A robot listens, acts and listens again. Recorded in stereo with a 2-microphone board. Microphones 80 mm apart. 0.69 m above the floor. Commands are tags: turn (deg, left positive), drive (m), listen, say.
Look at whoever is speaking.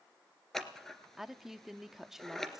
<turn deg="-30"/>
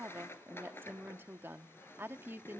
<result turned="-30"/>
<turn deg="-145"/>
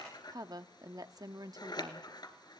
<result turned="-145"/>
<turn deg="-65"/>
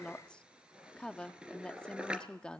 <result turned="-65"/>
<turn deg="15"/>
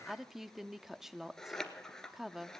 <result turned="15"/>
<say>Found it: a woman speaking, straight ahead.</say>